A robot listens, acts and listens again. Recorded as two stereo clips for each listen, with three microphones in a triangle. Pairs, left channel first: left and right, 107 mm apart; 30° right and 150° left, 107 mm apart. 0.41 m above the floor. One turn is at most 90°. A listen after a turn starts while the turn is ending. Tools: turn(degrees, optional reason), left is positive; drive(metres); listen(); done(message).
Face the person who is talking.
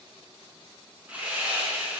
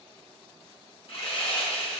listen()
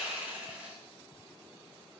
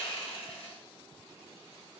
listen()
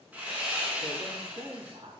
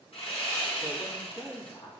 turn(degrees=-70, reason="The man speaking: 70° right.")
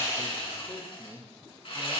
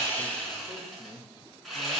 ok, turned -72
done("Found it: a man speaking, straight ahead, 2 to 4 m away.")